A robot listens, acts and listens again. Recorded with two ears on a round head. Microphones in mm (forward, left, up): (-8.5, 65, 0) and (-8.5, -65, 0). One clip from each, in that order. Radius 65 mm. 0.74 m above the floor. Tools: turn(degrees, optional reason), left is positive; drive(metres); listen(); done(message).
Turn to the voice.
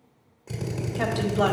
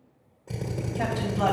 turn(degrees=50, reason="The woman speaking: about 50° left or 130° left.")
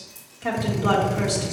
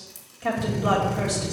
done("Facing the woman speaking.")